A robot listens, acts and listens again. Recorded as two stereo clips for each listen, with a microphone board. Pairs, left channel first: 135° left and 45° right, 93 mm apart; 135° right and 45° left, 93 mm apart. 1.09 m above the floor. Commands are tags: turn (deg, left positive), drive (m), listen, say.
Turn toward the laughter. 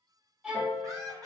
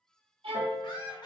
<turn deg="-90"/>
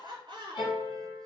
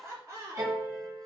<turn deg="-10"/>
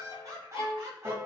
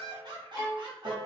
<turn deg="15"/>
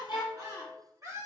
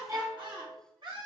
<turn deg="10"/>
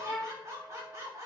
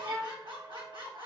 <turn deg="10"/>
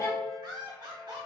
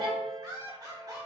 <say>Facing the laughter, 2 to 4 m away.</say>